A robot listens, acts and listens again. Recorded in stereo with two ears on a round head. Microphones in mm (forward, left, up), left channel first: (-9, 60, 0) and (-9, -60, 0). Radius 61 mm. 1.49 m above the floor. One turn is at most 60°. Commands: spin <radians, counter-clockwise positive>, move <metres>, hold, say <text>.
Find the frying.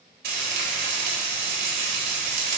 spin -1.05
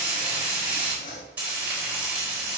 spin -0.26
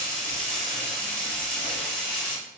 say Facing the frying, 2 to 4 m away.